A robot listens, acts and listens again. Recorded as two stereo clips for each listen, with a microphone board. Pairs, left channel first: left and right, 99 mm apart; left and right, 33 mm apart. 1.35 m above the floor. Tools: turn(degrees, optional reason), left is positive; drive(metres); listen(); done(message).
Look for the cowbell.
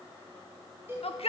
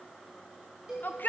turn(degrees=-25, reason="The cowbell: about 25° right or 155° right.")
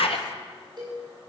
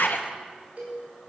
turn(degrees=-130, reason="So it is at 130° right.")
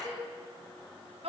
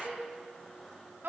listen()
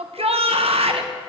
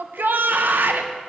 listen()
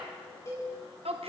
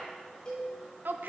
turn(degrees=30, reason="The cowbell is now 30° left.")
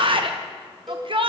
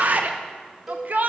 done("Found it: a cowbell, straight ahead, over 4 m away.")